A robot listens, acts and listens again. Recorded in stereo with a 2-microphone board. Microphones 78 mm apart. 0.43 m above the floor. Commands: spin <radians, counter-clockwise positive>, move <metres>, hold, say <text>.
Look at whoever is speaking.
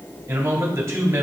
spin -0.70
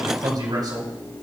spin -1.66
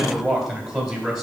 say Found it: a man speaking, straight ahead, 2 to 4 m away.